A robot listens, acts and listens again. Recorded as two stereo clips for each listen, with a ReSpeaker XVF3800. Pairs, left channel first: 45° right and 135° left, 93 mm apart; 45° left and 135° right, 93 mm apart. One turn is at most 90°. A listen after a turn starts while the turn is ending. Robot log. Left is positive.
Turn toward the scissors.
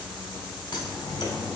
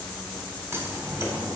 note: The scissors: 75° right.
cmd yaw -75
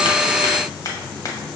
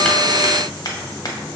end: Found it: scissors, straight ahead, under 1 m away.